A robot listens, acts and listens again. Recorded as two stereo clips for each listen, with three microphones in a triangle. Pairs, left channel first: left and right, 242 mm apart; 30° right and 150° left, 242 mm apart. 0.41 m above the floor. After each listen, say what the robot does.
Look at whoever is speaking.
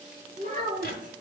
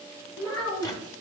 Turn 35° right.
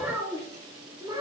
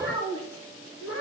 Turn 20° right.
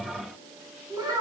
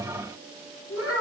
Turn 15° right.
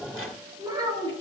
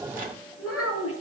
Turn 20° right.
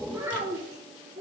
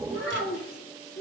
Turn 15° right.
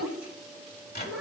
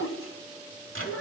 Facing the child speaking.